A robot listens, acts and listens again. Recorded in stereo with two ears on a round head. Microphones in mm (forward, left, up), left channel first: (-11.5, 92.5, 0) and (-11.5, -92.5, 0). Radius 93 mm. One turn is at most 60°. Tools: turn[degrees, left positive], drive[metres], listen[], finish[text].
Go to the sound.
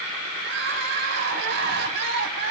Thought: The crying: about 65° right or 115° right.
Action: turn[-60]
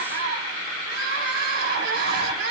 Thought: So it is at 55° right.
Action: turn[-55]
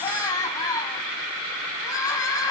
Thought: The crying is now 20° left.
Action: turn[20]
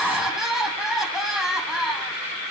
Action: drive[1.0]
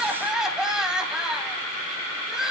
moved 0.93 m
Action: drive[1.0]
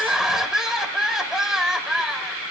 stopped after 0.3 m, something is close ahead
Action: finish[Arrived at the crying, straight ahead.]